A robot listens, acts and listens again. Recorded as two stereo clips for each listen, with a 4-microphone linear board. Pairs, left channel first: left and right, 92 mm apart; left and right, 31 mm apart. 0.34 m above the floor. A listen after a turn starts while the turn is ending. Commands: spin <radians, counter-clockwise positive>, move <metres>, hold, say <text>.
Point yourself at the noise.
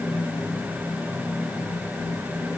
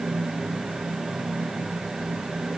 hold
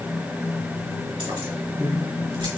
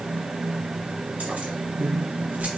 spin -1.31
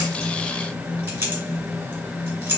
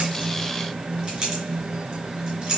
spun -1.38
spin -0.44
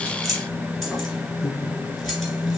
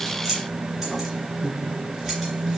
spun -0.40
say Facing the keys jangling, 2 to 4 m away.